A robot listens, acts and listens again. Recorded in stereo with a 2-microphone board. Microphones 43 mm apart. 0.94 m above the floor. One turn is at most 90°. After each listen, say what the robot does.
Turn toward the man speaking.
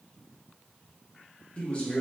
Turn 30° left.
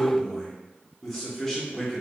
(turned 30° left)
Facing the man speaking, 1 to 2 m away.